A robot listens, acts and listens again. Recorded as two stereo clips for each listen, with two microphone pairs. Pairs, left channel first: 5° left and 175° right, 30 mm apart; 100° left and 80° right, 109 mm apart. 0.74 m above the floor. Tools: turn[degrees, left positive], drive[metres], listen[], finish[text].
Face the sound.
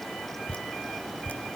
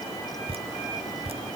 Thought: The dripping: 45° right.
Action: turn[-45]
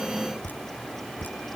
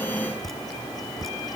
Thought: The dripping is now 10° left.
Action: turn[10]
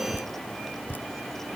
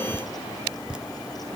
Action: finish[Facing the dripping.]